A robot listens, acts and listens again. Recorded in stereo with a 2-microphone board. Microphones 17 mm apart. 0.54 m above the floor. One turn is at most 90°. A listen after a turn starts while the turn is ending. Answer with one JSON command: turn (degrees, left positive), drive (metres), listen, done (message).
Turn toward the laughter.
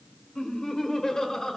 {"turn": 30}
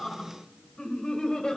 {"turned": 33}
{"turn": 90}
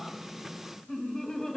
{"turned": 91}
{"turn": 35}
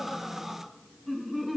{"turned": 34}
{"done": "Facing the laughter."}